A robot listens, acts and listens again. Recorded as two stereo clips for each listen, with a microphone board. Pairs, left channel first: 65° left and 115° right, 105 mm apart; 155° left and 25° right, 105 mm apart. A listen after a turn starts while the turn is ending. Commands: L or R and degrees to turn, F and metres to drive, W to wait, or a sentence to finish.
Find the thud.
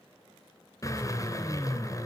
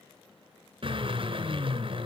W
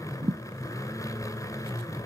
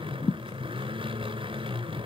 R155
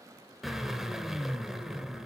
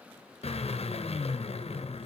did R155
I heard a thud from this way, but can't make it out now.